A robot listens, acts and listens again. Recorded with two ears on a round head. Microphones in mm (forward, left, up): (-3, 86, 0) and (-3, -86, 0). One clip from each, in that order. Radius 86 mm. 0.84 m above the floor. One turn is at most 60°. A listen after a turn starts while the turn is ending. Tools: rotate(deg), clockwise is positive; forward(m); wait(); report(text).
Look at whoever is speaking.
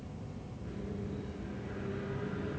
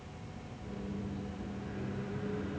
wait()
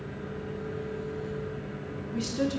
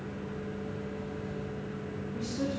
rotate(-60)
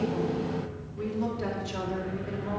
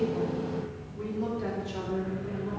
rotate(-30)
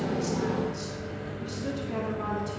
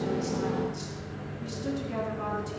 report("Facing the woman speaking, 1 to 2 m away.")